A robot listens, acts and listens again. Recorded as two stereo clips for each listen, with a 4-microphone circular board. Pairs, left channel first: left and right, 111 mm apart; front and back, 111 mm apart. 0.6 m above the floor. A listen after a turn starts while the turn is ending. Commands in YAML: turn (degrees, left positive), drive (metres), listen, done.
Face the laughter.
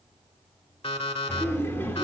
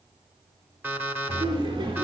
turn: 160
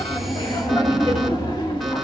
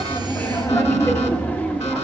turn: 75
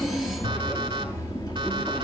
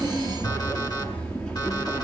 turn: 85
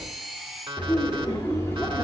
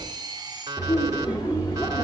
turn: 30
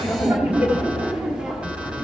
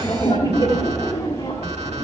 turn: -15
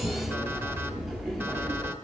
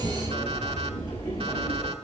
done: "Facing the laughter, 1 to 2 m away."